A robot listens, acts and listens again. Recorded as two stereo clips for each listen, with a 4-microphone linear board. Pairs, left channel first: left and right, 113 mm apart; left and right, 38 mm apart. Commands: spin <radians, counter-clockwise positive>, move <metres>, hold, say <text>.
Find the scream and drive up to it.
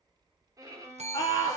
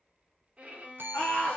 spin 0.61
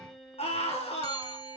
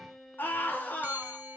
spin 1.92
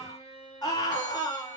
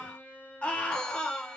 spin 0.61
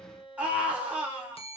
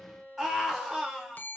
spin -0.17
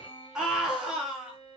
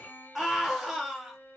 move 1.0
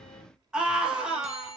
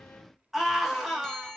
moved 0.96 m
move 1.0
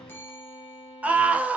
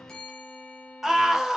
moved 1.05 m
spin -0.17
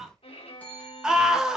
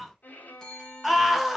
move 1.0
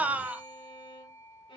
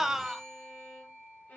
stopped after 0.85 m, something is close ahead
spin -0.26
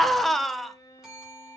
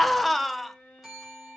say Arrived at the scream, straight ahead.